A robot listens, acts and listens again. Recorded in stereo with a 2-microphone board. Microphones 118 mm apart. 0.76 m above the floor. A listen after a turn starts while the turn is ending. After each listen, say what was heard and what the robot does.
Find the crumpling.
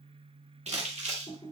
Turn 90° right.
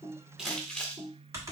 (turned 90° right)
Found it: crumpling, straight ahead, 1 to 2 m away.